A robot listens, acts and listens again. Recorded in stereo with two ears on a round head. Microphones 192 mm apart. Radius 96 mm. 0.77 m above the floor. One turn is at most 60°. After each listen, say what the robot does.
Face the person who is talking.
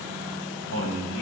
Turn 60° left.
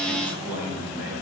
Turn 45° left.
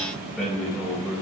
Found it: a man speaking, straight ahead, over 4 m away.